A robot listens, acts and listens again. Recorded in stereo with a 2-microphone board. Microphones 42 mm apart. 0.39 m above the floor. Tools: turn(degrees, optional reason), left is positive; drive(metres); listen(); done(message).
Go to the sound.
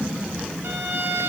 turn(degrees=-65, reason="The violin: about 65° right or 115° right.")
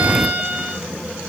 turn(degrees=-45, reason="So it is at 45° right.")
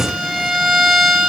turn(degrees=-15, reason="The violin is now 15° right.")
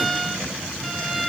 drive(metres=1.0)
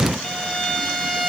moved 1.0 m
drive(metres=1.0)
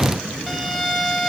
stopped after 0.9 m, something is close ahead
done("I am next to the violin.")